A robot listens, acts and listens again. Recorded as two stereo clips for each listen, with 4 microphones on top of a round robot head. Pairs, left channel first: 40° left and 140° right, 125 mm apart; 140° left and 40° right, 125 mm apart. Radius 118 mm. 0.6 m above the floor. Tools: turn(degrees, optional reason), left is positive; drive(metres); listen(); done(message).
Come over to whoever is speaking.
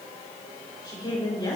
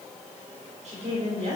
turn(degrees=-15, reason="The woman speaking: 15° right.")
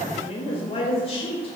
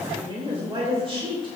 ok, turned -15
drive(metres=1.0)
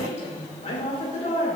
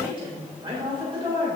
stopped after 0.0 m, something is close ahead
done("Something is in my way. I am facing the woman speaking but have not reached it.")